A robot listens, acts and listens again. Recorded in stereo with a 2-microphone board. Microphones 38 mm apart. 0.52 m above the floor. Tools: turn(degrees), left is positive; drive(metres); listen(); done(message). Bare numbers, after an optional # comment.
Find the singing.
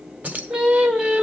# The singing: about 25° right or 155° right.
turn(-25)
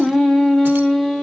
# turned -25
done("Found it: singing, straight ahead, 2 to 4 m away.")